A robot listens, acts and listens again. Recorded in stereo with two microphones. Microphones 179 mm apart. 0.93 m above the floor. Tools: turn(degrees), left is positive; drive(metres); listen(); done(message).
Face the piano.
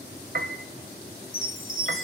turn(degrees=-65)
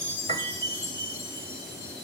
turn(degrees=-45)
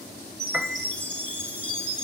done("Found it: a piano, straight ahead.")